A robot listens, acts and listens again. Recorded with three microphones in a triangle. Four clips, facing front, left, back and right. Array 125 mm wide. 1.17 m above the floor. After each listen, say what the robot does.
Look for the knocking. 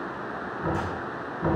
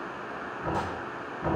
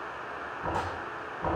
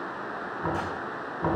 Turn 110° right.
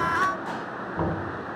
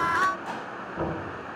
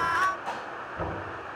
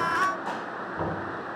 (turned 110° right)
Turn 10° right.
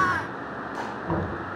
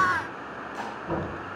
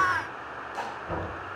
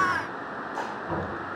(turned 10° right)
Facing the knocking.